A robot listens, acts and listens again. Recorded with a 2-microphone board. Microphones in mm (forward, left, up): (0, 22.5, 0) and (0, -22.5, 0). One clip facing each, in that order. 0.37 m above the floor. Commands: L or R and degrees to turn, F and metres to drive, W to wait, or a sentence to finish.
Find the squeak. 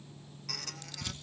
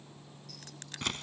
L70
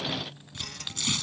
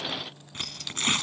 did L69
L40
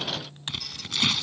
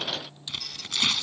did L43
Found it: a squeak, straight ahead.